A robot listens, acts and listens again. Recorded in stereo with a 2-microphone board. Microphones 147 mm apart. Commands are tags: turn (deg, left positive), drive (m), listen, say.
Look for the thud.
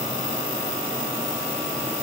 <listen/>
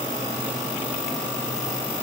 <listen/>
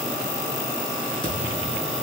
<turn deg="30"/>
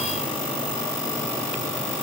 <listen/>
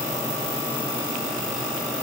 <say>I heard a thud, but can't make it out now. It was about straight ahead or 120° left.</say>